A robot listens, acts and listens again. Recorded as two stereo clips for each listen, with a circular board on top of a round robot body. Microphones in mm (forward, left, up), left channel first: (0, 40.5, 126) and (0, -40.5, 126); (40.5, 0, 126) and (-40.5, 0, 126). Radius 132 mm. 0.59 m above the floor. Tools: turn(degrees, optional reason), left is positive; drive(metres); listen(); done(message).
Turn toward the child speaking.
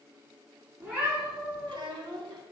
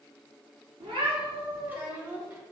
turn(degrees=-115, reason="The child speaking: 115° right.")
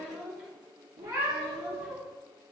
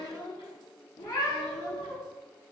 done("Found it: a child speaking, straight ahead.")